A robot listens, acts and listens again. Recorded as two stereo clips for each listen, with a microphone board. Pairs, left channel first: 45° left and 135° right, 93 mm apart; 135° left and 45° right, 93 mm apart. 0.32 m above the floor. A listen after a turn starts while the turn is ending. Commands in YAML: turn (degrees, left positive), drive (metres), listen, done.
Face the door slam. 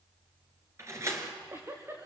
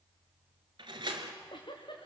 turn: -80
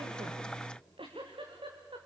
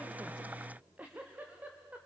done: "I heard a door slam from this way, but can't make it out now."